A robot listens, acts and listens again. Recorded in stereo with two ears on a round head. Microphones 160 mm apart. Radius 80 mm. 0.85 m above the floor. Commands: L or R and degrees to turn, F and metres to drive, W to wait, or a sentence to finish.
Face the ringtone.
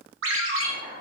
R90
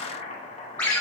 L10
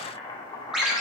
Facing the ringtone.